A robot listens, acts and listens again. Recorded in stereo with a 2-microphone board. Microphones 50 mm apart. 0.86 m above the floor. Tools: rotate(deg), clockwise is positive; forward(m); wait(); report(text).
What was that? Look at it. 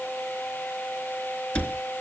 rotate(-25)
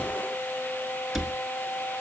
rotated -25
report("Facing the cupboard door, 2 to 4 m away.")